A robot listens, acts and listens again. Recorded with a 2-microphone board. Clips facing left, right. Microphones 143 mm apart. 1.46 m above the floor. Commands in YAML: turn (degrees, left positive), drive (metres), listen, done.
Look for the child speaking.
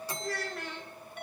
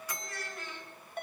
turn: 65
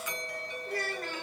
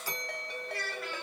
turn: 45
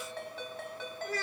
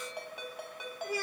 turn: -10
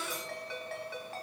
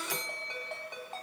listen: true
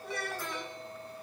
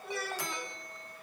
done: "Facing the child speaking."